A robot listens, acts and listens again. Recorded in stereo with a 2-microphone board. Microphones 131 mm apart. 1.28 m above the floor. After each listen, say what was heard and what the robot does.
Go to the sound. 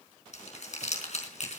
The crumpling: about 60° left or 120° left. Turn 60° left.
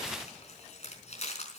So it is at 55° left. Turn 55° left.
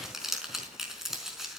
Drive 1.0 m forward.
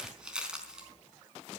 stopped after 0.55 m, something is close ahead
Something is in my way. I am facing the crumpling but have not reached it.